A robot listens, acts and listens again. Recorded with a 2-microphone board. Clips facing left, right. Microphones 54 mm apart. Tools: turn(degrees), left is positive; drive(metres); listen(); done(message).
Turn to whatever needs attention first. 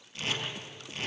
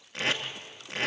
listen()
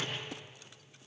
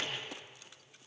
listen()
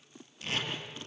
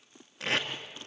done("I can't make out anything urgent to turn to.")